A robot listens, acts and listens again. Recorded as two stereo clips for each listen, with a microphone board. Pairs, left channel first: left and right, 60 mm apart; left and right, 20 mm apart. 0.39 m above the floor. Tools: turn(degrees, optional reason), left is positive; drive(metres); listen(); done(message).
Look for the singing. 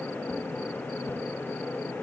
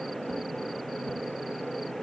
listen()
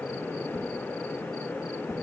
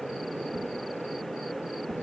listen()
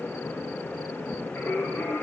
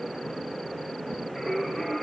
turn(degrees=40, reason="The singing: about 40° left or 140° left.")
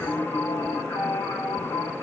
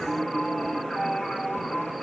turn(degrees=100, reason="So it is at 100° left.")
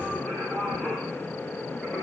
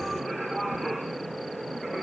turn(degrees=15, reason="The singing is now 15° left.")
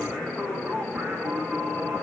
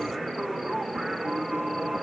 done("Found it: singing, straight ahead, 2 to 4 m away.")